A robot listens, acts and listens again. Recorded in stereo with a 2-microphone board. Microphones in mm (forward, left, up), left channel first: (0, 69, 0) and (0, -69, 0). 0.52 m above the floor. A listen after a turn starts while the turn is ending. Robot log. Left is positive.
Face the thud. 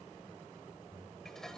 cmd idle
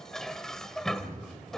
cmd yaw -30
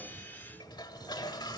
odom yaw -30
cmd idle
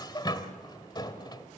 end: I heard a thud, but can't make it out now. It was about 15° left or 135° right.